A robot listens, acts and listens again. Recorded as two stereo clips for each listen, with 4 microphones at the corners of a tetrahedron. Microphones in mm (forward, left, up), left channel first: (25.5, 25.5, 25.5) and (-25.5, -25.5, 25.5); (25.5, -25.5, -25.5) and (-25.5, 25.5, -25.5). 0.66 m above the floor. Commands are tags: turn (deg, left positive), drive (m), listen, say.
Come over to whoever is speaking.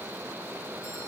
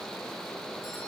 <listen/>
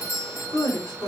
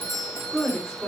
<turn deg="40"/>
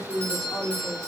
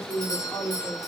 <drive m="1.0"/>
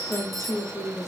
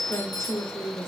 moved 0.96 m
<drive m="1.0"/>
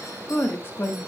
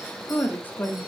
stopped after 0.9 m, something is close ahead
<say>I am next to the woman speaking.</say>